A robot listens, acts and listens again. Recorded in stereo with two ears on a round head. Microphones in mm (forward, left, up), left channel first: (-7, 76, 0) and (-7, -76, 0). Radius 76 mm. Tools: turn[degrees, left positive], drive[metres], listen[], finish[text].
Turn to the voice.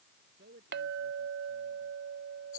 Thought: The man speaking: about 65° right or 115° right.
Action: turn[-65]
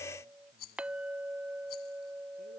Action: listen[]
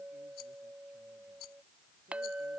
Action: listen[]
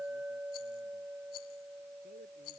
Action: finish[I heard a man speaking, but can't make it out now. It was about straight ahead or 50° right.]